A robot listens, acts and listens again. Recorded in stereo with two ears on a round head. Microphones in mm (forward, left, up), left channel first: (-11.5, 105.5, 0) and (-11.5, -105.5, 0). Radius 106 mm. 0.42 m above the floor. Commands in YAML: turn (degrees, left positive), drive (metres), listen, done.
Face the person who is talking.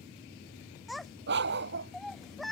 turn: 30
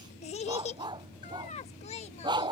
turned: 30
turn: 150
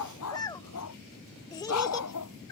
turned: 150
turn: 20
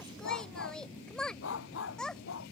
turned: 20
done: "Facing the child speaking."